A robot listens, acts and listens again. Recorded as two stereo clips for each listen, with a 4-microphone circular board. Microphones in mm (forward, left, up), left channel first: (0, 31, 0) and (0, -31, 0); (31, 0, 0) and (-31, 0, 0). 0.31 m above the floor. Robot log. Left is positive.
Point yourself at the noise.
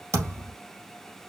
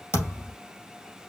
note: The thud: 45° right.
cmd yaw -45
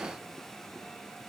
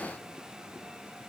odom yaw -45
end: Facing where the thud came from. I can't hear it now.